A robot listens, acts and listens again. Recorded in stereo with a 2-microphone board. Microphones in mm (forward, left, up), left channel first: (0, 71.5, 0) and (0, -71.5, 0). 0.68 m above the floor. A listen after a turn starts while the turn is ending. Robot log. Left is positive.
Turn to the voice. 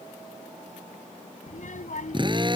note: The child speaking: about 65° left or 115° left.
cmd yaw +65
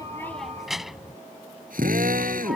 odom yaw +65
end: Facing the child speaking.